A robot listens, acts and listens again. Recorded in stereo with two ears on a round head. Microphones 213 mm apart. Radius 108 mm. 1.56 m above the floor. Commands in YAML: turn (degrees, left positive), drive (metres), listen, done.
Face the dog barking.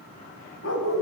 turn: 50
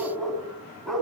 done: "Facing the dog barking, over 4 m away."